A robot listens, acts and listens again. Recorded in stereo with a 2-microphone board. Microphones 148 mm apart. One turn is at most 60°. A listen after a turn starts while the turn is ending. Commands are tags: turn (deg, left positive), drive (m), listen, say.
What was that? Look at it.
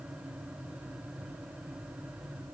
<listen/>
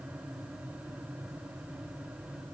<listen/>
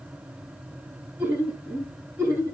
<turn deg="-30"/>
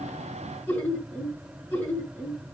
<turn deg="15"/>
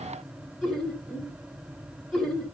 <say>Facing the laughter, over 4 m away.</say>